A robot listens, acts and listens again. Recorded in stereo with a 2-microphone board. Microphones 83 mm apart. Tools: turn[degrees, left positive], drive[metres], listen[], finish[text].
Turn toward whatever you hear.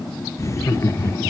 Thought: The laughter: about 30° left or 150° left.
Action: turn[30]
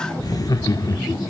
Thought: The laughter: about 45° left or 135° left.
Action: turn[45]
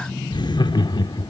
Thought: So it is at 115° left.
Action: turn[115]
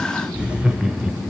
Thought: The laughter is now 10° right.
Action: turn[-10]
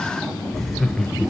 Action: finish[Facing the laughter.]